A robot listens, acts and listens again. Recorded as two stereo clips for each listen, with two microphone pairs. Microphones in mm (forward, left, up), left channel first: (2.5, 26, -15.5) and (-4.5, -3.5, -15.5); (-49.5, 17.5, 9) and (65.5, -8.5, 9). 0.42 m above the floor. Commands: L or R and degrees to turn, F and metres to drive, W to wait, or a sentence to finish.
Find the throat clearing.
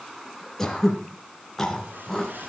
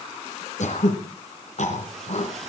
L155
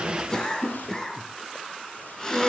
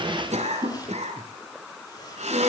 L10
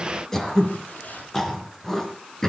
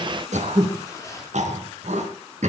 Facing the throat clearing.